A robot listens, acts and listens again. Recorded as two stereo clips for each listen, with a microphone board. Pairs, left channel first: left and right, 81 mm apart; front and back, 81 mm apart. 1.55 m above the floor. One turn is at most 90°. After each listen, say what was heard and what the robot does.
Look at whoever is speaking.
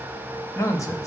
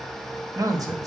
The man speaking: 135° left. Turn 90° left.
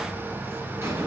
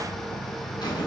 Nothing new. It was at 45° left. Turn 45° left.
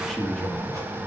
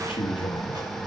Found it: a man speaking, straight ahead.